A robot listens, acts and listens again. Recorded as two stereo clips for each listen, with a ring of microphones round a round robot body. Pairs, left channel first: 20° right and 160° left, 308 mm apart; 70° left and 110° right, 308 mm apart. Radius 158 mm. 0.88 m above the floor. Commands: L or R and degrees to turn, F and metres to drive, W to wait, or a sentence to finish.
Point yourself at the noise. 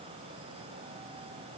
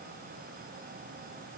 W
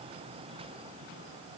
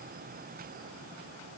W
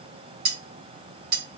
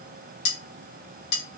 L90
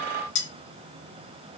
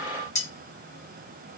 R15
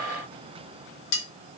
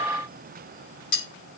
Found it: cutlery clinking, straight ahead, 2 to 4 m away.